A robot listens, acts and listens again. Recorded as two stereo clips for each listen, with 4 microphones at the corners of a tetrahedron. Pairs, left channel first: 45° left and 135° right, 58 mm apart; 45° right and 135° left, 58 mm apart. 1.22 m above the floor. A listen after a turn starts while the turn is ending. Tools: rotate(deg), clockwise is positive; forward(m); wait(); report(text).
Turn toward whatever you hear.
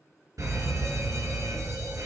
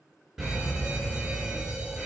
rotate(150)
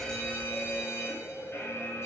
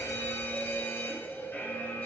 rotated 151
report("Found it: a fire alarm, straight ahead.")